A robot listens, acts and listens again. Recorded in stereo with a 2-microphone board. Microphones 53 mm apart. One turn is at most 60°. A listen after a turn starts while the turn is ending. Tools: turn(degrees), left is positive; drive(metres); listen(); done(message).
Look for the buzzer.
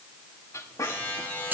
turn(degrees=35)
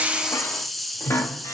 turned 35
listen()
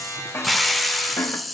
turn(degrees=60)
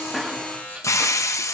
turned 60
turn(degrees=30)
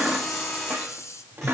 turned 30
listen()
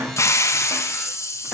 listen()
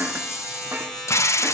done("Found it: a buzzer, straight ahead, over 4 m away.")